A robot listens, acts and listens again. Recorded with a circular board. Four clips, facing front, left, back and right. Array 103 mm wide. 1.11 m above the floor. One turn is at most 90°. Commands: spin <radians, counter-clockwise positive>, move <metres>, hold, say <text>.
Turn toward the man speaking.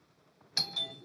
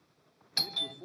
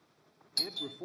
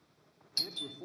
spin -1.57
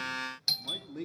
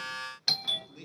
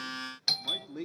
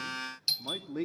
spin -1.57
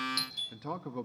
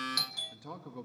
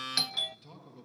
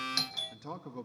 say Found it: a man speaking, straight ahead.